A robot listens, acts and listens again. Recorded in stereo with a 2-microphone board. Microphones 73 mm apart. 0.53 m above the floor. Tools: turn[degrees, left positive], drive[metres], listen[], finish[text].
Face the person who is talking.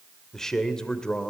Action: turn[30]
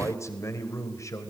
Thought: So it is at 135° left.
Action: turn[135]
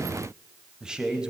Thought: The man speaking is now 10° right.
Action: turn[-10]
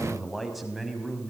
Action: finish[Facing the man speaking.]